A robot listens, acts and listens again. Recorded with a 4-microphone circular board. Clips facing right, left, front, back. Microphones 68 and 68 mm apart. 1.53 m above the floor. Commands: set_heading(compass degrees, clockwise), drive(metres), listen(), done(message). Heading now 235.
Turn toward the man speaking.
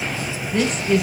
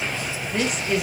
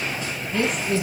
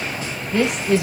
set_heading(55)
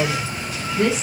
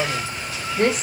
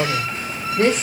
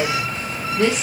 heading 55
set_heading(5)
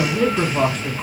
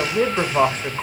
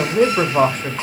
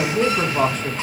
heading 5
set_heading(320)
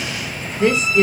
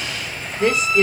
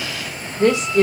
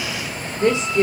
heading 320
done("Found it: a man speaking, straight ahead.")